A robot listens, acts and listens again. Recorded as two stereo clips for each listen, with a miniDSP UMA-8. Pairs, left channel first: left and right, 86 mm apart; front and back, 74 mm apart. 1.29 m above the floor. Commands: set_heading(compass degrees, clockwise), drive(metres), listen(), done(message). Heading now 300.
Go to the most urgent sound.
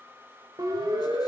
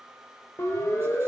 set_heading(350)
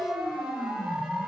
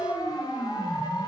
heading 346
drive(1.0)
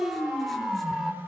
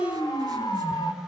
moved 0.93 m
drive(1.0)
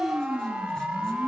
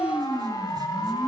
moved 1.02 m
set_heading(356)
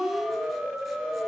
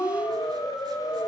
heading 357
drive(1.0)
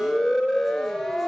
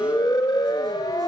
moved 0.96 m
drive(1.0)
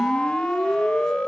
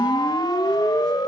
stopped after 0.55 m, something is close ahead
set_heading(347)
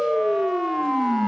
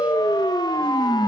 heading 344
done("I am next to the siren.")